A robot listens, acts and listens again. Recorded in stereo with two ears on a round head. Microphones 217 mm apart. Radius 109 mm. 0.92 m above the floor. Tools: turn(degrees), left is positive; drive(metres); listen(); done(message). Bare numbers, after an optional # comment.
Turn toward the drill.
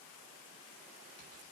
listen()
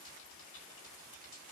listen()
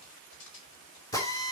turn(30)
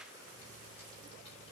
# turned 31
listen()
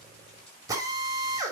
# So it is at 15° right.
turn(-15)
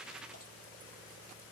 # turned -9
listen()
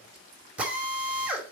done("Found it: a drill, straight ahead.")